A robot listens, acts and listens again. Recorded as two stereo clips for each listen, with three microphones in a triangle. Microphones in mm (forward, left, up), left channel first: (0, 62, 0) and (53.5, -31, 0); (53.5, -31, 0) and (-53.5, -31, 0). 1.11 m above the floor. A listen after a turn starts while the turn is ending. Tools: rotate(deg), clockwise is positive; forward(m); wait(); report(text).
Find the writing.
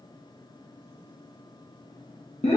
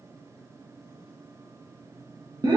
wait()
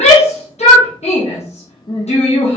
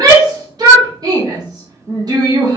wait()
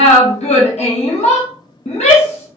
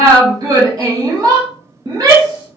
report("I can't make out writing, only a shout.")